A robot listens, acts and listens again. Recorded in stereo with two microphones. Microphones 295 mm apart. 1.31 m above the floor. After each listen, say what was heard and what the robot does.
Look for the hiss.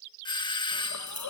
The hiss: about 70° left or 110° left. Turn 70° left.
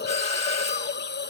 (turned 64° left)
So it is at 35° left. Turn 35° left.
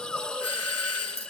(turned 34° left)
Found it: a hiss, straight ahead.